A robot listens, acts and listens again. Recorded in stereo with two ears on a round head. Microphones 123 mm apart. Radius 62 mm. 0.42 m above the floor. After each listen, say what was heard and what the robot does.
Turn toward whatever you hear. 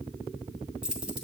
Turn 30° right.
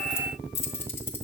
So it is at 15° left. Turn 15° left.
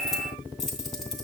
Found it: keys jangling, straight ahead.